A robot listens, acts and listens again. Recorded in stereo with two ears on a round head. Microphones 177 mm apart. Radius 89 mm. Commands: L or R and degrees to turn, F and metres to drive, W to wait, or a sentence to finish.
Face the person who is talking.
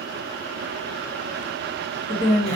L20
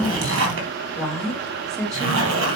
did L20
Facing the woman speaking, 2 to 4 m away.